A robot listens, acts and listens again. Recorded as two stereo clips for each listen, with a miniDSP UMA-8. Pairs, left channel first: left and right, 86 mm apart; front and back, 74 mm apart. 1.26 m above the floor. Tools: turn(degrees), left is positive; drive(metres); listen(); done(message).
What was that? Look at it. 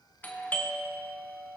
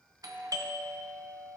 turn(degrees=160)
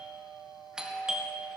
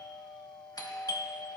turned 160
turn(degrees=-10)
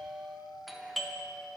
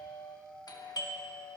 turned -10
done("Found it: a doorbell, straight ahead, 1 to 2 m away.")